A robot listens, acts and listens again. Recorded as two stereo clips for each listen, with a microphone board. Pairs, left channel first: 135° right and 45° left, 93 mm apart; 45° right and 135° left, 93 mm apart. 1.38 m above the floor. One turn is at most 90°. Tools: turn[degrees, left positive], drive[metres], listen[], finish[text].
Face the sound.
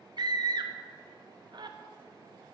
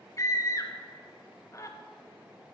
Thought: The scream: 10° left.
Action: turn[10]
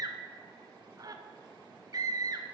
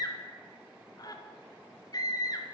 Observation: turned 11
Action: finish[Facing the scream.]